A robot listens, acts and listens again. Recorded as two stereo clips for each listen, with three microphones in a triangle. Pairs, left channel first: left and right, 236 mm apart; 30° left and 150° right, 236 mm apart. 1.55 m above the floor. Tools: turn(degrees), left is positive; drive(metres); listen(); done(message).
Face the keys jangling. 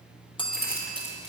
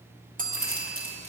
turn(degrees=-130)
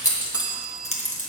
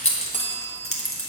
turn(degrees=35)
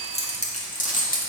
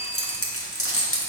turn(degrees=40)
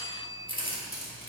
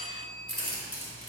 turn(degrees=40)
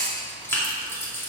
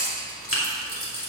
turn(degrees=10)
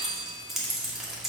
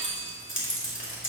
done("Found it: keys jangling, straight ahead, 2 to 4 m away.")